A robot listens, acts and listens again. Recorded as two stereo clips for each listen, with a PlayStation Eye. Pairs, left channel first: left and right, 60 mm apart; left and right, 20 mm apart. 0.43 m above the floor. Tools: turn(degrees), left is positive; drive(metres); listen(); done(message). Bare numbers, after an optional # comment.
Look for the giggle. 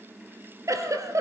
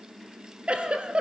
# The giggle: about 55° right or 125° right.
turn(-55)
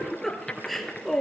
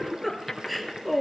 done("Found it: a giggle, straight ahead, 2 to 4 m away.")